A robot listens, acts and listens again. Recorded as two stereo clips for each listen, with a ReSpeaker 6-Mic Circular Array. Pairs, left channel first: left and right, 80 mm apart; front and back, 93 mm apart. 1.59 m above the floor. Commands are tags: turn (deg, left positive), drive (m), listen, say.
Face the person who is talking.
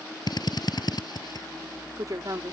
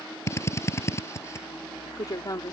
<turn deg="-50"/>
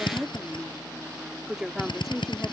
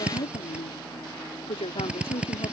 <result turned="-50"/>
<say>Found it: a woman speaking, straight ahead.</say>